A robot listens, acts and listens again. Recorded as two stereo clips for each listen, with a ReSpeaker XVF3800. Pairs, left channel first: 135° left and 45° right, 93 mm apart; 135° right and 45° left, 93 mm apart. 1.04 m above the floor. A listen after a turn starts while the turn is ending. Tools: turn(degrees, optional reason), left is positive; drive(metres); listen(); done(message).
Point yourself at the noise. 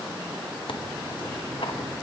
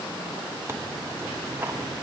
turn(degrees=110, reason="The tearing paper: 110° left.")
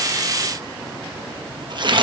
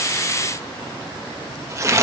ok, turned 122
turn(degrees=-10, reason="The tearing paper is now 10° right.")
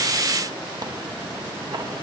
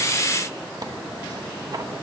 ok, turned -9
done("Found it: tearing paper, straight ahead.")